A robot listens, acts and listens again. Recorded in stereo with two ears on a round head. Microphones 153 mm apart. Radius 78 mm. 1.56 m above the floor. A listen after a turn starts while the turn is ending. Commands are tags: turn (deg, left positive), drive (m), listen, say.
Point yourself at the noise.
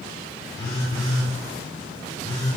<turn deg="25"/>
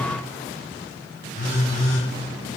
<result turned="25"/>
<turn deg="130"/>
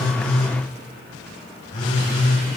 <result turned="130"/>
<turn deg="40"/>
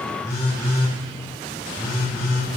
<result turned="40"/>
<turn deg="15"/>
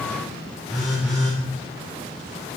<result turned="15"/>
<say>Facing the phone buzzing.</say>